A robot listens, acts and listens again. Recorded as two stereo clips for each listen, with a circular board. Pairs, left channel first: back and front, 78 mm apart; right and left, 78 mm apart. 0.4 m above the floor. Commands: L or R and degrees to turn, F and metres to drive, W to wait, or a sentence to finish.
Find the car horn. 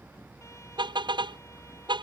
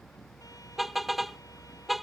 Found it: a car horn, straight ahead.